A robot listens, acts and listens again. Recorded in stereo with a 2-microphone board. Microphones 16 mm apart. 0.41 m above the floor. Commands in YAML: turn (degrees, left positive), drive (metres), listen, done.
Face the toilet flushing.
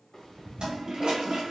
turn: -70
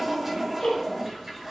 turn: -25
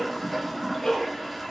done: "Found it: a toilet flushing, straight ahead, under 1 m away."